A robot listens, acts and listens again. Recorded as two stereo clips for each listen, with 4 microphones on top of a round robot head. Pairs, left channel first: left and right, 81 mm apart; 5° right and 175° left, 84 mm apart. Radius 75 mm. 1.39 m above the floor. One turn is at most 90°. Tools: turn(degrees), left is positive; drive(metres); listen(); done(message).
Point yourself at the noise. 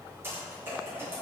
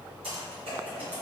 turn(degrees=-90)
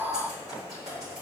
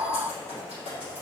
turn(degrees=-30)
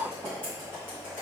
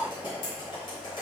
turn(degrees=15)
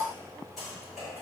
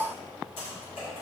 listen()
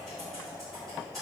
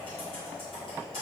done("Facing the typing on a keyboard, 2 to 4 m away.")